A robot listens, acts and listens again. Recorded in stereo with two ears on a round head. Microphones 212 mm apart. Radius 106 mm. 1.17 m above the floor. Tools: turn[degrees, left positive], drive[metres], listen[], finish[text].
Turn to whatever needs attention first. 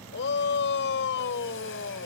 Thought: The shout: about 50° left or 130° left.
Action: turn[50]
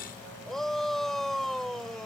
Action: finish[Facing the shout.]